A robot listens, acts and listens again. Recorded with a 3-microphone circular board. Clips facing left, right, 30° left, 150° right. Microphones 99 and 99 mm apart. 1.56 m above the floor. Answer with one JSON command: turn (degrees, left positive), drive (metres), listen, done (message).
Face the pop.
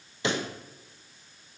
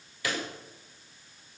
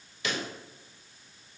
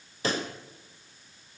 {"turn": 155}
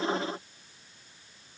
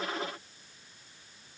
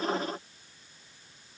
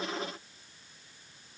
{"done": "I heard a pop from this way, but can't make it out now."}